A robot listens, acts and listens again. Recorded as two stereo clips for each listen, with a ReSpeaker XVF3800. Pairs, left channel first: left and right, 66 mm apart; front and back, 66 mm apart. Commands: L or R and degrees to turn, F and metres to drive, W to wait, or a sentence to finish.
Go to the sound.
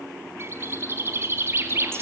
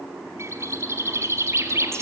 R135
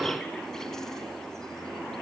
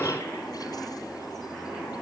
W
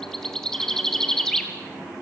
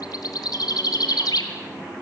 L10
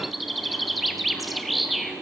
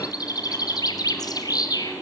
F1.0
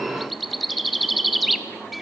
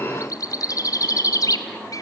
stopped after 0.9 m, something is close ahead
I am next to the bird.